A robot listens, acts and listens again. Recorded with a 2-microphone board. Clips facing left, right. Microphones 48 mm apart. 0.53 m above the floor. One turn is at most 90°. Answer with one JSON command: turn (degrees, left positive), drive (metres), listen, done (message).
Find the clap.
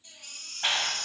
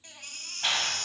{"turn": 20}
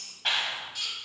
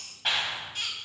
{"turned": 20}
{"done": "Found it: a clap, straight ahead."}